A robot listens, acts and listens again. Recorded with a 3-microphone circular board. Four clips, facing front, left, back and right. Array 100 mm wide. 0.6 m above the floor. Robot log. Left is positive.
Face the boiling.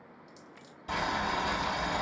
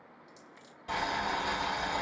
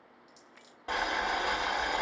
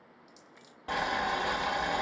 note: The boiling: 150° right.
cmd yaw -150
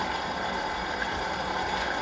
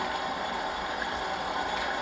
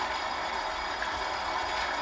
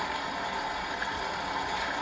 note: The boiling is now 35° left.
cmd yaw +35
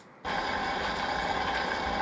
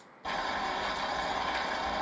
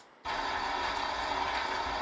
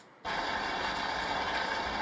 note: The boiling is now 10° right.
cmd yaw -10
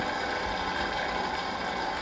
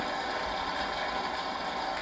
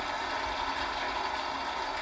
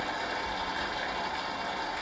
end: Facing the boiling, 1 to 2 m away.